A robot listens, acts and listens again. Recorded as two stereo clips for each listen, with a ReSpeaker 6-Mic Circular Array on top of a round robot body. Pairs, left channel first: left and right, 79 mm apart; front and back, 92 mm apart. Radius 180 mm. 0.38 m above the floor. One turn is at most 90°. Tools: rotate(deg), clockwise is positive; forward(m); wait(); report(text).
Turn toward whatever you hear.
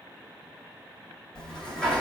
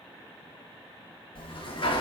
rotate(-10)
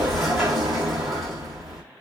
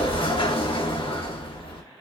report("Facing the sliding door, 1 to 2 m away.")